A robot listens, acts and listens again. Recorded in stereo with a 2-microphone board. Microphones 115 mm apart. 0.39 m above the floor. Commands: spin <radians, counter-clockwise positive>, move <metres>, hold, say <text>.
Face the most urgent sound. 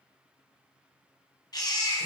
spin 0.61
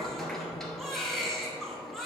say Facing the baby crying.